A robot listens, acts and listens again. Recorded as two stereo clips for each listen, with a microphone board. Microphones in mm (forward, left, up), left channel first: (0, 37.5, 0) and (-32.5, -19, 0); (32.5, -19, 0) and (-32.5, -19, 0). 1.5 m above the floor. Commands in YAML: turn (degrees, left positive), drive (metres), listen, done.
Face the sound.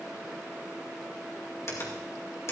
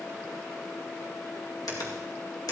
turn: 15
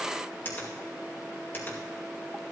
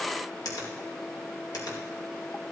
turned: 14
done: "Found it: a finger snap, straight ahead, 2 to 4 m away."